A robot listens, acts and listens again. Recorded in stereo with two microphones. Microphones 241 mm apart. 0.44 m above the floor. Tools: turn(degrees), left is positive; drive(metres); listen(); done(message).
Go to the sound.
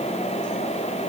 listen()
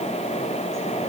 listen()
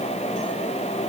done("I can't make out anything to turn to.")